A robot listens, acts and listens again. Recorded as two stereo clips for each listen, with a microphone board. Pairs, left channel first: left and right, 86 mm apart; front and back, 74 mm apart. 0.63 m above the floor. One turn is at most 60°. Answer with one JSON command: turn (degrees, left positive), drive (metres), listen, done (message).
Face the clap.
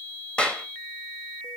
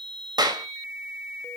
{"turn": 60}
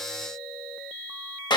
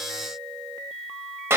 {"turn": 60}
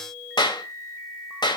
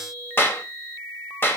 {"turn": 60}
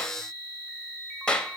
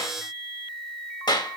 {"turn": 10}
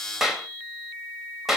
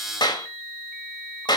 {"done": "Found it: a clap, straight ahead."}